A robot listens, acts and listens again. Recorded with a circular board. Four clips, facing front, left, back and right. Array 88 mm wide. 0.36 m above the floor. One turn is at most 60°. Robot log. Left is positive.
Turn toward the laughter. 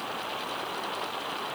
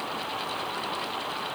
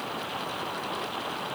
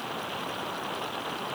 cmd idle
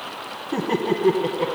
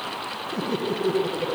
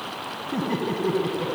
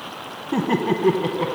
note: The laughter: 55° right.
cmd yaw -55
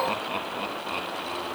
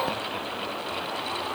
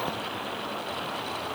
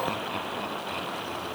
cmd idle
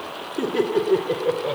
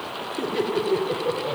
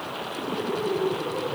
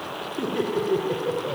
end: Facing the laughter.